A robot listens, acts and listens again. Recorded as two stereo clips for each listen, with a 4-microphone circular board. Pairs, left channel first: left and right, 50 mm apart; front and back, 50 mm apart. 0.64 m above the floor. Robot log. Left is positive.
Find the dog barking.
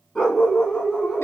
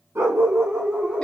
note: The dog barking: 160° left.
cmd yaw +160
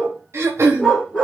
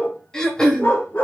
end: Facing the dog barking.